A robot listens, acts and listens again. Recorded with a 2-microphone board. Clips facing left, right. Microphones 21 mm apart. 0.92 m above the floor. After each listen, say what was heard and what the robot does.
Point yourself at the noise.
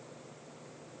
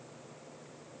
Keep listening.
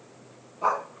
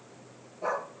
The dog barking: about 70° left or 110° left. Turn 70° left.
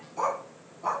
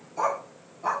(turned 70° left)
So it is at 10° right. Turn 10° right.
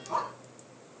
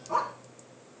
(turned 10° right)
The dog barking is now 10° right. Turn 10° right.
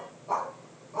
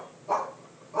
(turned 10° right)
The dog barking is now 15° right. Turn 15° right.
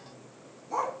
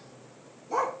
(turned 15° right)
The dog barking is now 15° right. Turn 15° right.
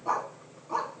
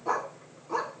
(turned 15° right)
Facing the dog barking, 2 to 4 m away.